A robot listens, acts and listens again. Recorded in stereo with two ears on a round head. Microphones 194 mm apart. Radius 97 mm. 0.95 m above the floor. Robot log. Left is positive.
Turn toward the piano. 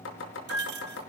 cmd yaw -90
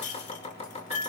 end: Found it: a piano, straight ahead.